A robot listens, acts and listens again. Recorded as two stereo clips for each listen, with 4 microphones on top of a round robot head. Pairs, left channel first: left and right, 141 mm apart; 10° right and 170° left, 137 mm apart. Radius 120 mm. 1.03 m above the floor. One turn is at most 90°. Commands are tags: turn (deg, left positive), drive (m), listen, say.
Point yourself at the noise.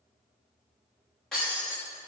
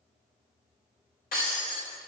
<say>Facing the breaking glass.</say>